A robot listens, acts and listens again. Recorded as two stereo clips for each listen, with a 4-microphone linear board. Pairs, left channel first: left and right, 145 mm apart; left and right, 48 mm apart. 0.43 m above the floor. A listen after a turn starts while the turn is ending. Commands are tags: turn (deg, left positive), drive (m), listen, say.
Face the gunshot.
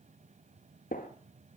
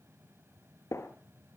<turn deg="90"/>
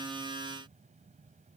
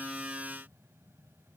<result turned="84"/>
<say>Facing where the gunshot came from. I can't hear it now.</say>